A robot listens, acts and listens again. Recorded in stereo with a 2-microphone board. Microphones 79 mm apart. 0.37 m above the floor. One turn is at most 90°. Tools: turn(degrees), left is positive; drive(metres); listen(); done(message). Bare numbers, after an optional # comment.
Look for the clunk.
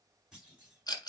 turn(-30)
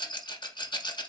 listen()
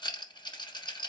done("I heard a clunk, but can't make it out now. It was about 20° left or 140° right.")